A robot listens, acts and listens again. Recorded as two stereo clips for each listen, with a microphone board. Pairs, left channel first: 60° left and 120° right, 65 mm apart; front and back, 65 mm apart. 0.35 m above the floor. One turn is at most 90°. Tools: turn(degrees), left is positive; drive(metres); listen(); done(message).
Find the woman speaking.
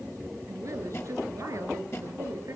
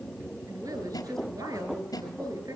turn(degrees=-90)
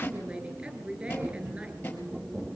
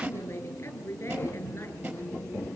turn(degrees=-50)
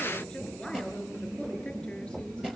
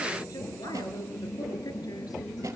turn(degrees=-20)
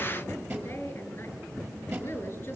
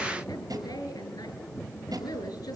done("Facing the woman speaking, over 4 m away.")